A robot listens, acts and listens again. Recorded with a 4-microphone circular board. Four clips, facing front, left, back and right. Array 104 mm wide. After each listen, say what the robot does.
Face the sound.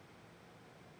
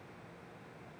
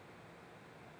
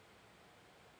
Keep listening.
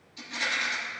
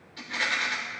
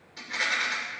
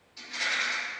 Turn 150° left.
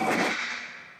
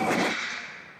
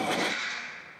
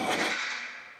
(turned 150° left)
Turn 15° left.
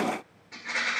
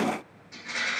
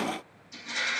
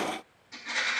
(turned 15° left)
Facing the rattle, 2 to 4 m away.